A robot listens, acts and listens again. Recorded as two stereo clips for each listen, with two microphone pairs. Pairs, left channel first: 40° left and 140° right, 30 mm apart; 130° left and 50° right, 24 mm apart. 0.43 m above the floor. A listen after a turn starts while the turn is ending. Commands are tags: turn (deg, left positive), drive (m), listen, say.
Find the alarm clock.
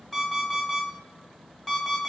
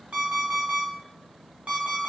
<turn deg="-45"/>
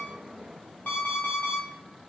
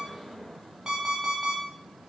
<turn deg="15"/>
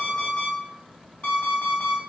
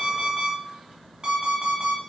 <say>Facing the alarm clock.</say>